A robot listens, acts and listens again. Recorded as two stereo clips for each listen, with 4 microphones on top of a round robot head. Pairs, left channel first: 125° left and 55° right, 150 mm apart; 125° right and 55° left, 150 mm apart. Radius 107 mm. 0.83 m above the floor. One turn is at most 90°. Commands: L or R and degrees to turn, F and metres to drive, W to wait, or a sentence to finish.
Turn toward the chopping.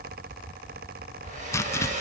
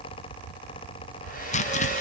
R90
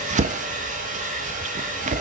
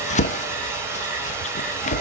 R90
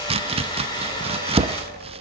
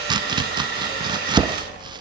Facing the chopping, under 1 m away.